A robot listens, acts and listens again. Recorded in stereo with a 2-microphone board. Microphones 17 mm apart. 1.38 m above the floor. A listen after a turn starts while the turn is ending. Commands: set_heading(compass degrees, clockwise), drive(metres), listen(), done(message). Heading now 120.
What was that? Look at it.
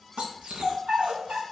set_heading(195)
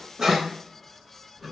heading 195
listen()
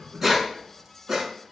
set_heading(220)
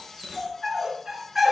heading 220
set_heading(235)
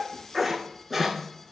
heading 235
done("Found it: a dog barking, straight ahead, over 4 m away.")